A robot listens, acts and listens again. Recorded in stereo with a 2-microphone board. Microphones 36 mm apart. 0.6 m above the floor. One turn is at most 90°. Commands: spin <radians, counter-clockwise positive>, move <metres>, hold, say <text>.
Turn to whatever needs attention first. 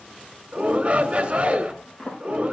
spin -0.79
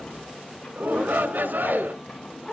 spin -1.57
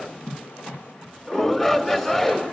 spin 0.26
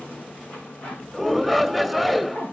say Found it: a shout, straight ahead.